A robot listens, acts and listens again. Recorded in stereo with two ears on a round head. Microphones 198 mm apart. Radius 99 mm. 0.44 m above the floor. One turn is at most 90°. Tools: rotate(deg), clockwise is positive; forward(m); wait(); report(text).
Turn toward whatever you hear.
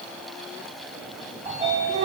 rotate(30)
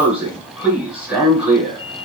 report("Found it: a sliding door, straight ahead, 1 to 2 m away.")